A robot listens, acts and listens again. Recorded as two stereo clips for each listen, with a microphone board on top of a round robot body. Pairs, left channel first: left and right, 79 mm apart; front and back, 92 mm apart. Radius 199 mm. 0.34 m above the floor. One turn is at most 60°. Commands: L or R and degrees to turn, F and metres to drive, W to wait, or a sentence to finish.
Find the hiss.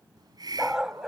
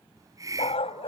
R60
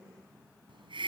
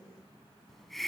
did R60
R60
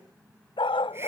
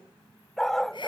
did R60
R25
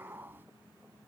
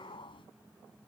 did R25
R25
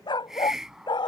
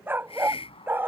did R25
Found it: a hiss, straight ahead.